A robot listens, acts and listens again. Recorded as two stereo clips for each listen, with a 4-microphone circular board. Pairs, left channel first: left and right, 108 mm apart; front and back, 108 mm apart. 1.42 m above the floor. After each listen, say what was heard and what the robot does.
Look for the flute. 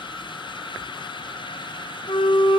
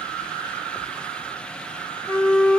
The flute: 75° left. Turn 75° left.
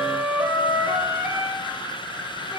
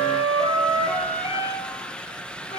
The flute is now 15° right. Turn 15° right.
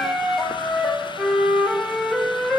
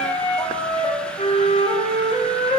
Facing the flute.